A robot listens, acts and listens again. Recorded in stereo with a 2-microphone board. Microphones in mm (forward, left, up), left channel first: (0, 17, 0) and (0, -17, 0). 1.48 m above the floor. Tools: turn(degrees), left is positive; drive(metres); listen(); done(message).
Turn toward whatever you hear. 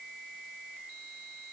listen()
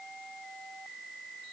listen()
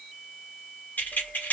turn(degrees=60)
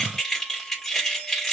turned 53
turn(degrees=10)
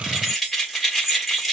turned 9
done("Facing the keys jangling.")